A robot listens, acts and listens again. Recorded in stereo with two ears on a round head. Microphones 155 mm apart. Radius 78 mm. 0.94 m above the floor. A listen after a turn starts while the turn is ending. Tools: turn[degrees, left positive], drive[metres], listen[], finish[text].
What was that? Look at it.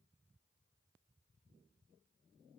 Action: listen[]
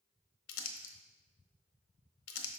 Action: turn[90]
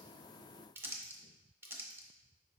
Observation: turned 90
Thought: So it is at 10° right.
Action: turn[-10]
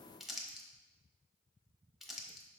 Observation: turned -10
Action: finish[Found it: crumpling, straight ahead.]